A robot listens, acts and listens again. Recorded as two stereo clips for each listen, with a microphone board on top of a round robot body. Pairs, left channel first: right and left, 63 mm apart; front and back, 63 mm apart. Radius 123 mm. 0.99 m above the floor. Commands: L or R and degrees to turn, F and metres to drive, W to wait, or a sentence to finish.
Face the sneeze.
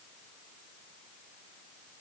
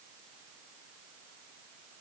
W
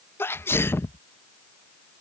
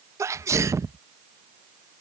R140
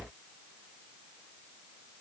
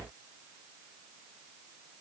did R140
Facing where the sneeze came from. I can't hear it now.